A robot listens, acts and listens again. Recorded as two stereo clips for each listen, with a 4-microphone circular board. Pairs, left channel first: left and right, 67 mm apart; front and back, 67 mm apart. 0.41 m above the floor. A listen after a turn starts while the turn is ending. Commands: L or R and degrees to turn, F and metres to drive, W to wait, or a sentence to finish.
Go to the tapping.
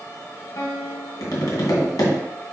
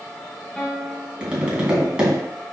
L105
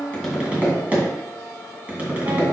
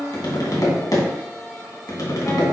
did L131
R25
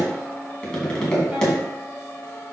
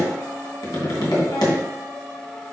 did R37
L10
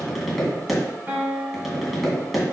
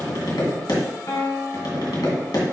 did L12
F1.0
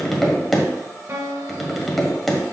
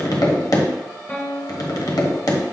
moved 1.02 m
F1.0
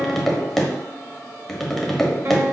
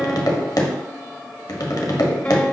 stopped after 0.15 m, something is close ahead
I am next to the tapping.